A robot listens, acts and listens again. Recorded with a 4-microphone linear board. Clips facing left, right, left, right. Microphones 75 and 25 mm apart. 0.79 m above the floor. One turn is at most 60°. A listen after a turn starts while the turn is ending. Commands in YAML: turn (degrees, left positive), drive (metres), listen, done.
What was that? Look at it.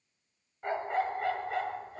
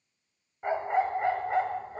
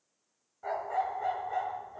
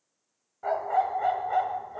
turn: -35
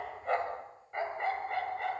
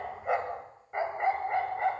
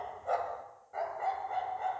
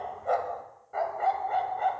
turn: -35
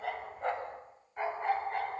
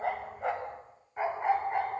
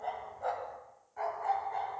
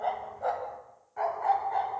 turn: -20
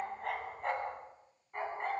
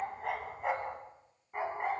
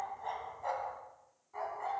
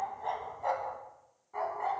turn: -15
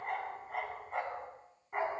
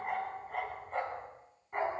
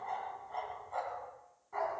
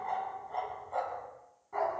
done: "Found it: a dog barking, straight ahead."